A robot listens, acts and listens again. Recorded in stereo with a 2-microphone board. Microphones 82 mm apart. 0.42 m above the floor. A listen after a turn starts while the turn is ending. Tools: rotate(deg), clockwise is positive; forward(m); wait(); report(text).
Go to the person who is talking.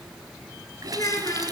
rotate(-50)
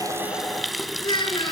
rotate(-80)
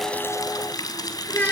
rotate(-20)
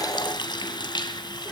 forward(1.0)
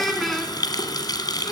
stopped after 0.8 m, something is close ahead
report("Something is in my way. I am facing the child speaking but have not reached it.")